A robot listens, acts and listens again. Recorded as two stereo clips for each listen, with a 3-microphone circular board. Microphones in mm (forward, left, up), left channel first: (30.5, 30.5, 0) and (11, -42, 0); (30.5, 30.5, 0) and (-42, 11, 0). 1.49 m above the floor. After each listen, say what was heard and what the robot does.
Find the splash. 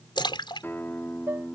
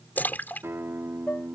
The splash: 85° left. Turn 85° left.
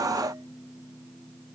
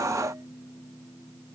Facing where the splash came from. I can't hear it now.